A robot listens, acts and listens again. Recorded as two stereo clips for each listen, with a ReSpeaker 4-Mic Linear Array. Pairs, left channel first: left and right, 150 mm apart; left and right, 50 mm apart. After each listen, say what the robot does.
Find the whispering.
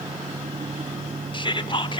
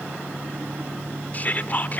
Turn 35° left.
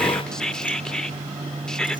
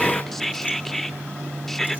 Found it: whispering, straight ahead.